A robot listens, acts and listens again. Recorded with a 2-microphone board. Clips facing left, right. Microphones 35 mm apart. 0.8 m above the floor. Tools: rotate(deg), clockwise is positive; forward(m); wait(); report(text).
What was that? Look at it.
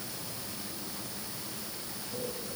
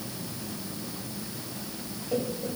rotate(55)
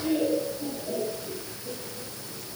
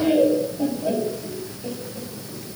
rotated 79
rotate(50)
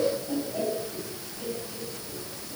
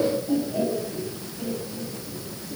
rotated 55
report("Facing the laughter.")